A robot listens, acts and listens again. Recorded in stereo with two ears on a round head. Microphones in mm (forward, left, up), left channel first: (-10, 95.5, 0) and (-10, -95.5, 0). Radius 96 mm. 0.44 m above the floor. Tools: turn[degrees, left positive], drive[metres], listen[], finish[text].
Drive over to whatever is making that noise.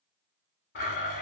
Thought: The blender: about 50° left or 130° left.
Action: turn[50]
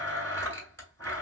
Thought: So it is at 15° left.
Action: turn[15]
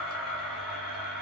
Action: drive[1.0]
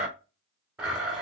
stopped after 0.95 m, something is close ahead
Thought: The blender is now 10° right.
Action: turn[-10]
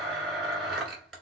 Action: finish[Arrived at the blender, straight ahead.]